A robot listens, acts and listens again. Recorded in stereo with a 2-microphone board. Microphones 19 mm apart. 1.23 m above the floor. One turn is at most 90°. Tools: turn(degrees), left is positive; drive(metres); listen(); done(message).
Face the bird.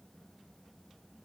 listen()
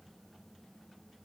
listen()
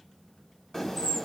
turn(degrees=15)
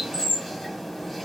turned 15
done("Facing the bird.")